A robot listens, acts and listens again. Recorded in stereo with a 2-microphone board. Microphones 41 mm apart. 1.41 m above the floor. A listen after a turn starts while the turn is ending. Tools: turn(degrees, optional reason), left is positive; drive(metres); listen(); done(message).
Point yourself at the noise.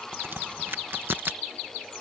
turn(degrees=-60, reason="The crack: about 60° right or 120° right.")
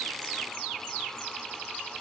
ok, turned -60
listen()
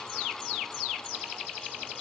done("I heard a crack, but can't make it out now. It was about straight ahead or 60° right.")